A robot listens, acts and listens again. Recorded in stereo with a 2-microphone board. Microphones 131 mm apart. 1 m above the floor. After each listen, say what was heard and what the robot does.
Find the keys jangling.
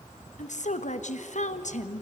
Keep listening.
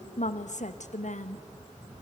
Keep listening.
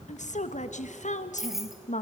Turn 30° right.
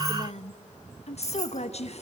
So it is at 25° left. Turn 25° left.
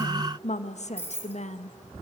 The keys jangling is now 15° left. Turn 15° left.
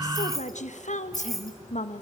Facing the keys jangling, 2 to 4 m away.